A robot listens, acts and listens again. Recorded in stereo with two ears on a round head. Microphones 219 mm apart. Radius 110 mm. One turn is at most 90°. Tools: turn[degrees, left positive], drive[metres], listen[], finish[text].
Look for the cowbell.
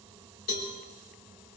Thought: The cowbell: about 70° left or 110° left.
Action: turn[70]
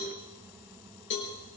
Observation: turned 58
Thought: So it is at 50° left.
Action: turn[50]
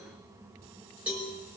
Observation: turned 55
Action: finish[Found it: a cowbell, straight ahead.]